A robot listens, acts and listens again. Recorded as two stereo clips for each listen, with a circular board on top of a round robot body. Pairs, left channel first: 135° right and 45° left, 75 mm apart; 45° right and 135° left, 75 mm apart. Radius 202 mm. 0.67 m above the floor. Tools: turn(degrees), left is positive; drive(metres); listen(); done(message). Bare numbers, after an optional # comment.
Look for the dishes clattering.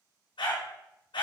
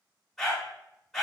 listen()
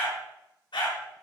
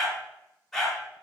listen()
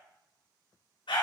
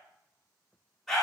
done("I can't make out dishes clattering to turn to.")